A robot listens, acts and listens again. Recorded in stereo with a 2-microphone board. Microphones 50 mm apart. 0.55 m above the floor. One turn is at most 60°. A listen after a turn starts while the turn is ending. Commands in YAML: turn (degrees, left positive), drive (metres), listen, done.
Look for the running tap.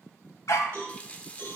turn: 25
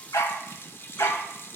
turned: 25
turn: 60
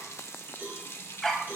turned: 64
turn: 60
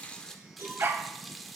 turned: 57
done: "Facing the running tap, under 1 m away."